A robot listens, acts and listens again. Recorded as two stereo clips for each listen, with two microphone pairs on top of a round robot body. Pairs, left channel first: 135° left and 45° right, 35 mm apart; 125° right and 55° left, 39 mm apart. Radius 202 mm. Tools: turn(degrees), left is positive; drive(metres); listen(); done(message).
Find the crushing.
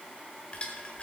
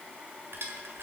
turn(degrees=75)
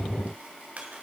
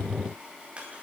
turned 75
done("Found it: crushing, straight ahead.")